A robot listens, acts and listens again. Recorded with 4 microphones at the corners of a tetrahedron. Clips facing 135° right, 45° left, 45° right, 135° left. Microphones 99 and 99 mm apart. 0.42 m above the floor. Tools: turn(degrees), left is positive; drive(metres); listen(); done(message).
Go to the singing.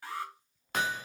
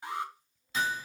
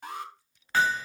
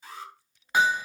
listen()
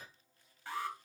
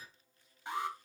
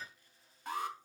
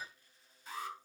listen()
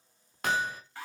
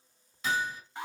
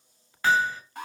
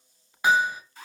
done("I can't make out singing, only an alarm and hammering.")